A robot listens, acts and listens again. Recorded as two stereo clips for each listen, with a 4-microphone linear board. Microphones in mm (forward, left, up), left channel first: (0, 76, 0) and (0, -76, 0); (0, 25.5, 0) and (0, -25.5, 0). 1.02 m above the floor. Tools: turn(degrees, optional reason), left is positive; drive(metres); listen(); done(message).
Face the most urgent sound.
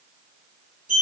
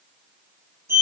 listen()
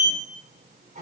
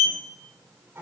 listen()
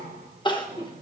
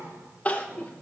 turn(degrees=30, reason="The crying: about 30° left or 150° left.")
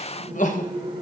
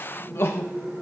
turn(degrees=115, reason="So it is at 115° left.")
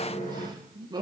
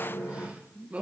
turn(degrees=-30, reason="The crying is now 30° right.")
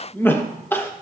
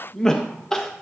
turn(degrees=15, reason="The crying is now 15° left.")
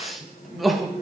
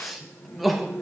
done("Facing the crying, 1 to 2 m away.")